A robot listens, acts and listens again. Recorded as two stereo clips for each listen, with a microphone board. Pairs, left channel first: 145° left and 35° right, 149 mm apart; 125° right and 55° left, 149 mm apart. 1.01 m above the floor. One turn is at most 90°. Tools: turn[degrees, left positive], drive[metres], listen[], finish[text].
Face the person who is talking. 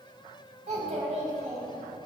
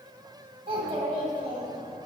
Action: finish[Facing the child speaking, 2 to 4 m away.]